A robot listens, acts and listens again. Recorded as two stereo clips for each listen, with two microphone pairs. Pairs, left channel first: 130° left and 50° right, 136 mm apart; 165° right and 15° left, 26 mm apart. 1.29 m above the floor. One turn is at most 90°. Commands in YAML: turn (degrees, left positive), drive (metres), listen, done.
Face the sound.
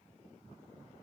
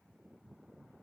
listen: true
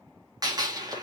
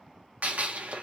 turn: 10
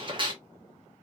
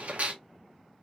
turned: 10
done: "Facing the gunshot, 1 to 2 m away."